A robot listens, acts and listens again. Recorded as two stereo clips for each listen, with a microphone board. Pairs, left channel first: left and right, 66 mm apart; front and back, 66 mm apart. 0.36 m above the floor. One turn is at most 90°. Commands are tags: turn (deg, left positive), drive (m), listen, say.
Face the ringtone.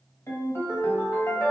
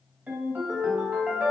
<turn deg="90"/>
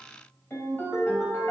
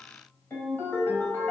<turn deg="45"/>
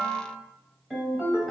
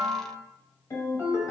<say>Found it: a ringtone, straight ahead, 1 to 2 m away.</say>